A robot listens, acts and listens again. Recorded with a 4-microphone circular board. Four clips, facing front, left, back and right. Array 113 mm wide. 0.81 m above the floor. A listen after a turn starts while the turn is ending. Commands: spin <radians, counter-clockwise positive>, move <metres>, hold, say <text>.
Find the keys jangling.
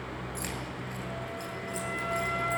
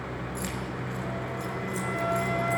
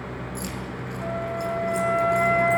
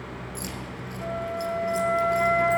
spin 0.61
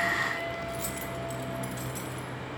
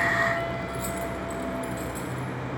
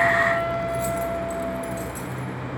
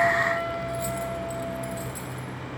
say Found it: keys jangling, straight ahead, 2 to 4 m away.